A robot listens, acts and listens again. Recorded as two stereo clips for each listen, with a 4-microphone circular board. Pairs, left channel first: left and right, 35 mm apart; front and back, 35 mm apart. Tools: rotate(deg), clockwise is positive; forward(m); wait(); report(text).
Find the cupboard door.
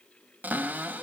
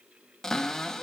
rotate(75)
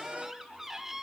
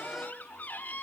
rotate(15)
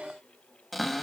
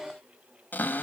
report("Found it: a cupboard door, straight ahead, 1 to 2 m away.")